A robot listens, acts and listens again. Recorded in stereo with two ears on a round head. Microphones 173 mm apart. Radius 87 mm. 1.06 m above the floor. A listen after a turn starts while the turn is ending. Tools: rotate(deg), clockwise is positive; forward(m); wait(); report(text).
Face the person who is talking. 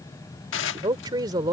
rotate(20)
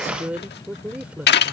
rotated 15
report("Facing the woman speaking.")